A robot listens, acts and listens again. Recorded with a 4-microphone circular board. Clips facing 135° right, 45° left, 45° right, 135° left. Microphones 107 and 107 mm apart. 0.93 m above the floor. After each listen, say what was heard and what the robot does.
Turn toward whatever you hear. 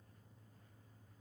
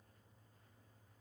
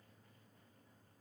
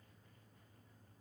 Keep listening.
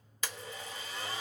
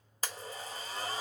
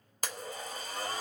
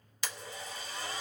Found it: a blender, straight ahead.